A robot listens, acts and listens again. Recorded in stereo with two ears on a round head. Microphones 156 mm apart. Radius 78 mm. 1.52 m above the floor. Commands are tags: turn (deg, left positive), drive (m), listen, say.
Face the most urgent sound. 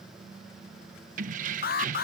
<turn deg="55"/>
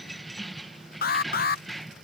<turn deg="65"/>
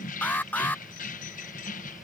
<turn deg="10"/>
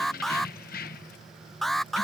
<say>Facing the alarm.</say>